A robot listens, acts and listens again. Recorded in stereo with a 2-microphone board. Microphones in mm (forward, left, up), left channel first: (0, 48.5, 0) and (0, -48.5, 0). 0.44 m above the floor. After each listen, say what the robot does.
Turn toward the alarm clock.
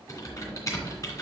Keep listening.
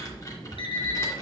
Turn 70° left.
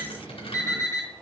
Turn 35° left.
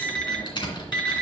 Turn 10° left.
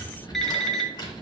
Found it: an alarm clock, straight ahead.